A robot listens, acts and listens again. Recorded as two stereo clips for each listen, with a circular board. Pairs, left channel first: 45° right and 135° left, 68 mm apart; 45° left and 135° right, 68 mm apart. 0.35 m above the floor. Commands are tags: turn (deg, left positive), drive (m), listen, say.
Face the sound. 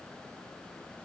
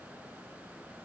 <listen/>
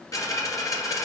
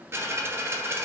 <turn deg="-80"/>
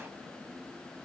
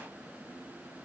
<say>I heard a dropped coin from this way, but can't make it out now.</say>